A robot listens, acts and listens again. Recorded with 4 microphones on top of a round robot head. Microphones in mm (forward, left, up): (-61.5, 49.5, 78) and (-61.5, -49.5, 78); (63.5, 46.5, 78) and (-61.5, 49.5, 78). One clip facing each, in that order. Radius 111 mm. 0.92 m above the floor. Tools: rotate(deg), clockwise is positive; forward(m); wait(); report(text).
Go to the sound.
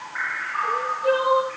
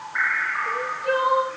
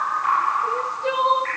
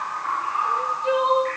rotate(-30)
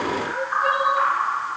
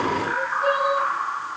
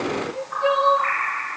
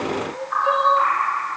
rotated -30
rotate(15)
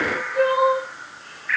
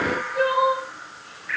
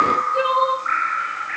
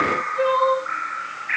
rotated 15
forward(1.0)
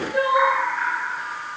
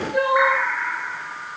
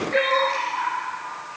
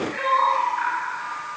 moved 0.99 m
forward(1.0)
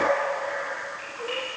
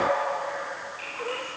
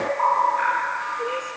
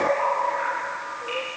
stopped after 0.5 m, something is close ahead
wait()
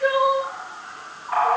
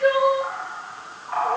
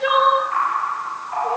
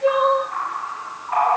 report("Blocked. The crying is further on, straight ahead.")